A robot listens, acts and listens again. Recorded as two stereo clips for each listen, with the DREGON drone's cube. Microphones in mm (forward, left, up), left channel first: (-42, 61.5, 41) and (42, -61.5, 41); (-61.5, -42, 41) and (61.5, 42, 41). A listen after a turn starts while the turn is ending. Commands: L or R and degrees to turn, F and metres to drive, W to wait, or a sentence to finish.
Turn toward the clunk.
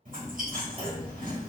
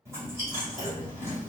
Facing the clunk, 1 to 2 m away.